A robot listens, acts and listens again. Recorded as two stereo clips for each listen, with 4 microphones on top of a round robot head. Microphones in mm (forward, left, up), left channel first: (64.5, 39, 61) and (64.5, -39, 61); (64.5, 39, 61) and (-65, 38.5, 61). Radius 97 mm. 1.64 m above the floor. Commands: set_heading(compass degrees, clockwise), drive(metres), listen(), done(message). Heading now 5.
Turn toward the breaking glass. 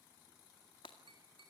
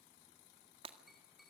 set_heading(225)
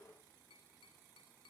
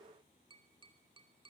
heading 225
done("I heard breaking glass from this way, but can't make it out now.")